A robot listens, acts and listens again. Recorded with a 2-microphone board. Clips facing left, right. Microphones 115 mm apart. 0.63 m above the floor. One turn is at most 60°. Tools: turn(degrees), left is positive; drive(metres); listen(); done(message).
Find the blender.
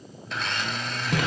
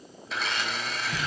turn(degrees=30)
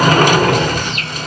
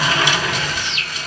listen()
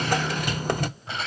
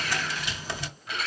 turn(degrees=60)
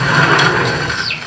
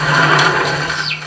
turn(degrees=60)
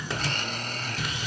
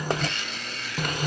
turn(degrees=40)
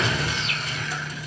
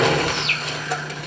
listen()
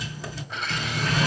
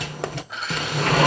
done("Found it: a blender, straight ahead.")